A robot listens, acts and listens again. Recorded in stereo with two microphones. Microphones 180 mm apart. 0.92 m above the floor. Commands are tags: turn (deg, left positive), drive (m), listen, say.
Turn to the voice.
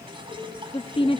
<turn deg="30"/>
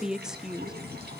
<say>Facing the woman speaking, under 1 m away.</say>